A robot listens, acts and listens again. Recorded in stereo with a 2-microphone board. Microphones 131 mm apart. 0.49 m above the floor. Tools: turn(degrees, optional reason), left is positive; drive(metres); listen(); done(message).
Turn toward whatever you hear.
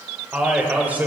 turn(degrees=-30)
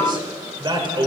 turn(degrees=-135, reason="So it is at 135° right.")
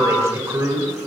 turn(degrees=-25, reason="The man speaking is now 25° right.")
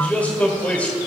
turn(degrees=10, reason="The man speaking is now 10° left.")
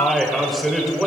done("Found it: a man speaking, straight ahead, 1 to 2 m away.")